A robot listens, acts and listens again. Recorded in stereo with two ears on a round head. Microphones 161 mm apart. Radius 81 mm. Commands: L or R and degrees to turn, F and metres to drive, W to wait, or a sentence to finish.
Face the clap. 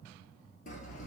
W
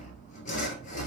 W
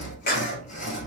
L55
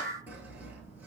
L55
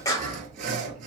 L20
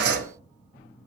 W
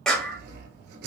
Facing the clap, 1 to 2 m away.